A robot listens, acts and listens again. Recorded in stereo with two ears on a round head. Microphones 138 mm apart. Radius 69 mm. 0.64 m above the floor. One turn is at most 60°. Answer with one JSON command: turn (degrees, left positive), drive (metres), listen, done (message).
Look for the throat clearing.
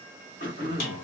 {"turn": 60}
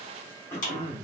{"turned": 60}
{"turn": 20}
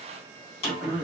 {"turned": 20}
{"done": "Found it: throat clearing, straight ahead, 1 to 2 m away."}